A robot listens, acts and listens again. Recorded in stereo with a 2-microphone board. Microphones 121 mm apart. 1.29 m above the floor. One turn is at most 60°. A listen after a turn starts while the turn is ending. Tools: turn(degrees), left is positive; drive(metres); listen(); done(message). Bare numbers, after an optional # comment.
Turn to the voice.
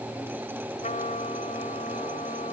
listen()
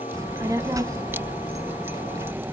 # The child speaking: about 30° right or 150° right.
turn(-30)
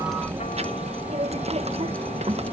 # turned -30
# So it is at 120° right.
turn(-60)
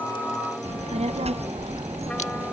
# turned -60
# The child speaking is now 60° right.
turn(-60)
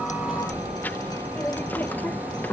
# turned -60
# The child speaking is now 15° left.
turn(15)
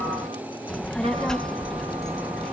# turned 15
done("Found it: a child speaking, straight ahead.")